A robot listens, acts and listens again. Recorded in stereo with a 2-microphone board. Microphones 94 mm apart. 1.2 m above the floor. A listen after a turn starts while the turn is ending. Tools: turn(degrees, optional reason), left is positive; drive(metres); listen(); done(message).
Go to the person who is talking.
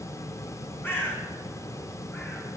listen()
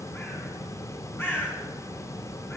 listen()
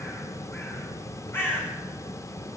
done("I can't make out anyone speaking, only a bird.")